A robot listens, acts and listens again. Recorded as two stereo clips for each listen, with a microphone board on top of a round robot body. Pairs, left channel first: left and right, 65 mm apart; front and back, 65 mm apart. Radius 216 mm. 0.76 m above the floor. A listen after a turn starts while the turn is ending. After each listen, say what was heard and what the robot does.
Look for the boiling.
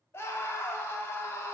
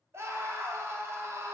Keep listening.
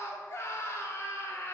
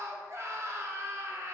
Keep listening.
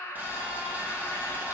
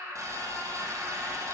The boiling: 150° right. Turn 150° right.
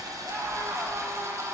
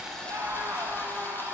The boiling is now 55° right. Turn 55° right.
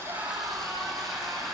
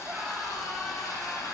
Found it: boiling, straight ahead, 1 to 2 m away.